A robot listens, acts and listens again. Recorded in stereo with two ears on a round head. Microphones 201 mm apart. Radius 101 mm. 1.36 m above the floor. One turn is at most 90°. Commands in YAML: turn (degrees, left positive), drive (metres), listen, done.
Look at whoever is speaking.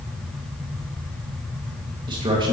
turn: -20
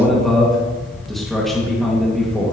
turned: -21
done: "Facing the man speaking, 1 to 2 m away."